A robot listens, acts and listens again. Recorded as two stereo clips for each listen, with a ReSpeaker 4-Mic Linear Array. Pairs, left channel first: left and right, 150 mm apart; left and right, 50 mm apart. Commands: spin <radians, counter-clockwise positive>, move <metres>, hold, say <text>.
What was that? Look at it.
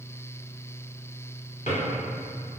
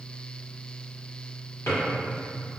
spin 1.05
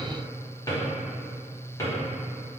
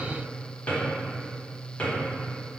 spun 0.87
spin 0.52
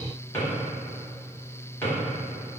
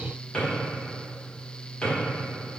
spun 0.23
spin 0.26
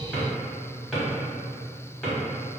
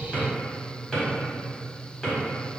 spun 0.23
say Facing the drawer, 1 to 2 m away.